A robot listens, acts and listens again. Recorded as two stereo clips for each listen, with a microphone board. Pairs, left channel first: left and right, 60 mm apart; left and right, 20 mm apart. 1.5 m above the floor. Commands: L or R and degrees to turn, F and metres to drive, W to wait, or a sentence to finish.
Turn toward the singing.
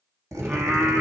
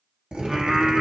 R30
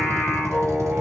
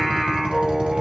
R10
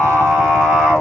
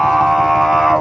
R15
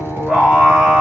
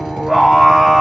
R15
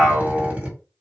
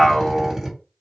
Found it: singing, straight ahead, 1 to 2 m away.